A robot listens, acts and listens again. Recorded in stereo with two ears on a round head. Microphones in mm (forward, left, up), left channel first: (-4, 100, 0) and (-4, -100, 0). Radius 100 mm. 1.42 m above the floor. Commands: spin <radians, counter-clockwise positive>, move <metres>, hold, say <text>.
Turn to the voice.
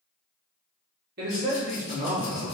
spin -0.44
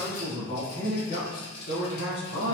spin 0.96
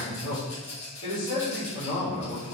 spin 0.44
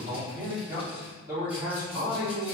spin -0.26
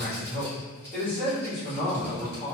say Found it: a man speaking, straight ahead.